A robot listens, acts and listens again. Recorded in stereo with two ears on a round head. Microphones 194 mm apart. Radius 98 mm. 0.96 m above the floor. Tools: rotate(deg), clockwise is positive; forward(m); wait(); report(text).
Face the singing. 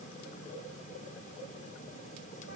wait()
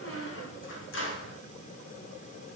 wait()
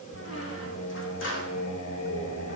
rotate(-90)
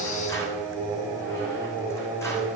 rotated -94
rotate(10)
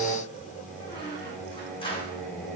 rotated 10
report("Found it: singing, straight ahead.")